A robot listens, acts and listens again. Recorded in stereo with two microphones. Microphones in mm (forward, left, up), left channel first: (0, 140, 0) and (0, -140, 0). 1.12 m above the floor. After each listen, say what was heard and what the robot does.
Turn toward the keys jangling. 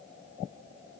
Keep listening.
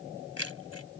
The keys jangling: about 60° left or 120° left. Turn 60° left.
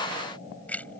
Found it: keys jangling, straight ahead.